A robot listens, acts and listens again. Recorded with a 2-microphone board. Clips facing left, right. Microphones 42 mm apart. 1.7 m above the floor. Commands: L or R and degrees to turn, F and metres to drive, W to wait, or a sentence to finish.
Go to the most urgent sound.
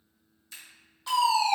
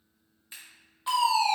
R20
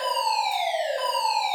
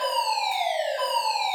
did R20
F1.0
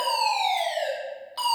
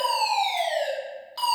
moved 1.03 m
F1.0
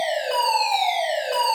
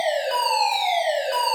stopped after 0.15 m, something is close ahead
I am next to the fire alarm.